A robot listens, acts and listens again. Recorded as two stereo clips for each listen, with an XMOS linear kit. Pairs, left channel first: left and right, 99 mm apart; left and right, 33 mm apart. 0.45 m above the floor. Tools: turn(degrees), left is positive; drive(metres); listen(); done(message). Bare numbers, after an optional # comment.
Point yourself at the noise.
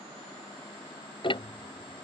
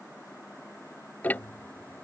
# The ticking: about 60° left or 120° left.
turn(60)
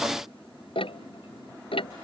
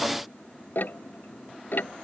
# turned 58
# So it is at 65° left.
turn(65)
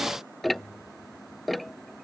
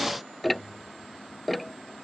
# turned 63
done("Found it: ticking, straight ahead.")